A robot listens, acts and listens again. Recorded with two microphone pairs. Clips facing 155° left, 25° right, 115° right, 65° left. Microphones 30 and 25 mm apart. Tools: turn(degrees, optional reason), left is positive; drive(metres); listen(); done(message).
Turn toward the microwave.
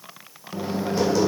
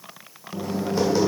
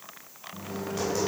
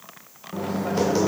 turn(degrees=90, reason="The microwave: 90° left.")
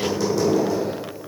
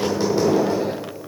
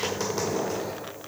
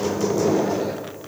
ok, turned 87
done("Facing the microwave.")